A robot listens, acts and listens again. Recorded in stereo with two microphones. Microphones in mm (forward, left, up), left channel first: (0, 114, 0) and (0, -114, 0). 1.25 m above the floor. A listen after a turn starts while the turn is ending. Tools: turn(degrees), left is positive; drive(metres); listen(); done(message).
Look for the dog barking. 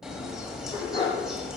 turn(degrees=20)
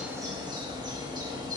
listen()
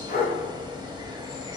turn(degrees=135)
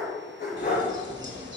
turn(degrees=45)
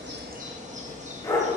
turn(degrees=15)
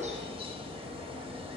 listen()
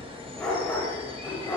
done("Facing the dog barking, 1 to 2 m away.")